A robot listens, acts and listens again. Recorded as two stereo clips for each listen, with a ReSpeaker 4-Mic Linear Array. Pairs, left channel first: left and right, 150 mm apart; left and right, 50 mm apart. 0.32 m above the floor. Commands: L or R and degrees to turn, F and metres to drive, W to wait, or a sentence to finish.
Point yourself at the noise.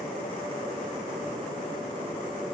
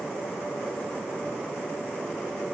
W
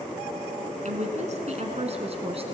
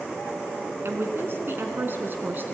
R40
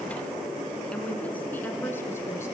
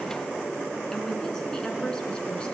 L15
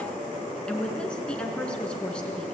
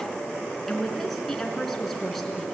Facing the woman speaking, 2 to 4 m away.